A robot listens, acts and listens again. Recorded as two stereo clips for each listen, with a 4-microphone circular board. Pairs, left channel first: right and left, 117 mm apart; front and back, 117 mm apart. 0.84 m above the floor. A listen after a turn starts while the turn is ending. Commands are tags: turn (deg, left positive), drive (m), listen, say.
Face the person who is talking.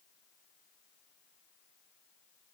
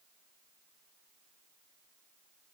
<listen/>
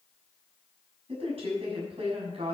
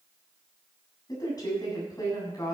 <turn deg="55"/>
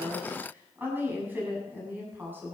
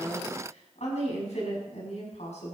<turn deg="15"/>
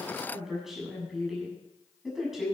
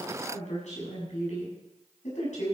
<say>Facing the woman speaking.</say>